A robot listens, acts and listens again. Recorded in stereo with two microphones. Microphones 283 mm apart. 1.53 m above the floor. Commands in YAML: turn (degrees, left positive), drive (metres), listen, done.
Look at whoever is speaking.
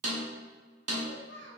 turn: 40
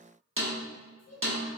turn: 95
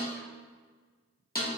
listen: true
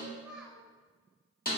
done: "Found it: a child speaking, straight ahead."